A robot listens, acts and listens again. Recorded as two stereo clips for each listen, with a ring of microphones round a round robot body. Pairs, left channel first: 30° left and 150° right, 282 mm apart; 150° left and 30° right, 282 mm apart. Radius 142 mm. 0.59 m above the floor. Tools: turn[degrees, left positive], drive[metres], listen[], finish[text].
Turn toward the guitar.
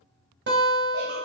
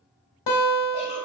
Thought: The guitar: 155° left.
Action: turn[155]
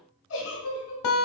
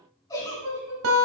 Thought: The guitar is now 10° left.
Action: turn[10]
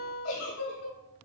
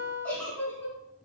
Action: finish[Facing the guitar, 1 to 2 m away.]